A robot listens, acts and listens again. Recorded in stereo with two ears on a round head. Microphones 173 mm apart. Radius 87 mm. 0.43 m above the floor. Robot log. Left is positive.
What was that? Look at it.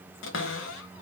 note: The cupboard door: about 65° left or 115° left.
cmd yaw +65
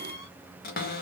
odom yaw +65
note: So it is at 45° left.
cmd yaw +45
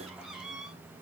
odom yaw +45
end: Found it: a cupboard door, straight ahead, under 1 m away.